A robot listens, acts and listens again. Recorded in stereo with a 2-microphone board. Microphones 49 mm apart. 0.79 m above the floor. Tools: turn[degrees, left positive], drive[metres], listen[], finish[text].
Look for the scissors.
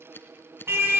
Thought: The scissors: about 50° left or 130° left.
Action: turn[50]
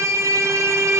Action: listen[]
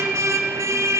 Action: listen[]
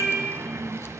Action: finish[I heard scissors, but can't make it out now. It was about straight ahead or 80° left.]